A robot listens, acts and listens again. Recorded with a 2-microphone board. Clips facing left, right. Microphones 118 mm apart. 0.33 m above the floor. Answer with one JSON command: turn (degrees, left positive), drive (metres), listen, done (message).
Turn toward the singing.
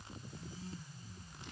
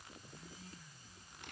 {"listen": true}
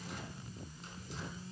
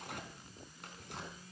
{"listen": true}
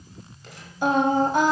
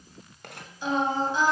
{"turn": 60}
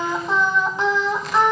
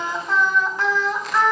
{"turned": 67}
{"turn": 25}
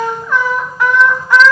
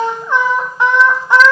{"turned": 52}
{"turn": -30}
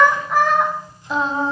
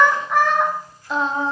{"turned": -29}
{"done": "Found it: singing, straight ahead, 2 to 4 m away."}